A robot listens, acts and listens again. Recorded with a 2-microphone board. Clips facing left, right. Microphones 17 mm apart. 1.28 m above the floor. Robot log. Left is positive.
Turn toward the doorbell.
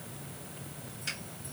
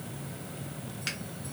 cmd idle
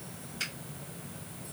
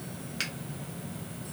cmd idle
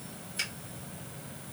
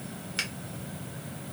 end: I can't make out a doorbell to turn to.